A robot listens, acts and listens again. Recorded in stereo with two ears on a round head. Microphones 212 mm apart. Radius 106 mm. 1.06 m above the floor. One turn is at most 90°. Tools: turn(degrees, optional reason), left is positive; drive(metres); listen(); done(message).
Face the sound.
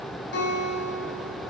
turn(degrees=50, reason="The guitar: about 50° left or 130° left.")
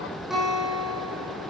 done("Facing the guitar.")